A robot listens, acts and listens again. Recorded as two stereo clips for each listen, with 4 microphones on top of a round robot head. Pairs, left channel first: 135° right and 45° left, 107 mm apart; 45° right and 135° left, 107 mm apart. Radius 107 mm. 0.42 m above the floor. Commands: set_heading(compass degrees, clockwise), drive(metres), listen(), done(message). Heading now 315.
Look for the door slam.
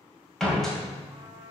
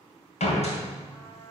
set_heading(5)
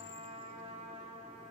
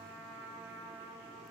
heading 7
done("I heard a door slam from this way, but can't make it out now.")